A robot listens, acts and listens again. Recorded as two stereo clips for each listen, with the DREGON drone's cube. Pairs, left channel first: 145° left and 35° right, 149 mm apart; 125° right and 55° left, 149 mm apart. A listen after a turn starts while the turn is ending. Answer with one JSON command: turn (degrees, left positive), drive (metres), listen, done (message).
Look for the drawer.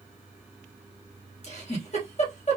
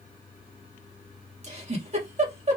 {"listen": true}
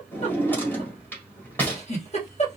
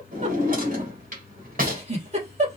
{"turn": 70}
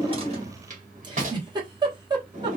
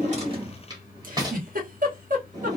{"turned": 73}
{"done": "Facing the drawer."}